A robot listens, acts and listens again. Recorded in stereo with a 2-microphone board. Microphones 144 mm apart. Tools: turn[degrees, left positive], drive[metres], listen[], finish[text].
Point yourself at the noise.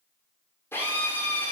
Thought: The drill: about 15° left or 165° left.
Action: turn[15]
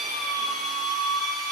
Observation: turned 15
Action: finish[Found it: a drill, straight ahead.]